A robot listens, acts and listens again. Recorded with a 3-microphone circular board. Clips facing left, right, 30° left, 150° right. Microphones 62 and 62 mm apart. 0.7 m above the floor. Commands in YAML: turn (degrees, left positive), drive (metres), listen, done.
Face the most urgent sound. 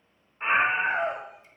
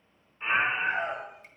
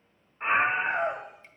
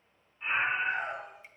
turn: 45
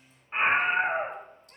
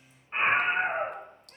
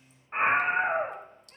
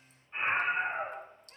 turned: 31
turn: 15
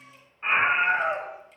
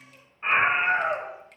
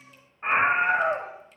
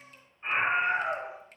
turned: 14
done: "Facing the scream, under 1 m away."